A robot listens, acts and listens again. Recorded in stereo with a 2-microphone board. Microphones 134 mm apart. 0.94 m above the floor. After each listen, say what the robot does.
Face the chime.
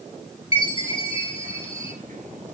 Turn 45° left.
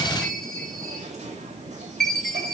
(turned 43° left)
Found it: a chime, straight ahead, 2 to 4 m away.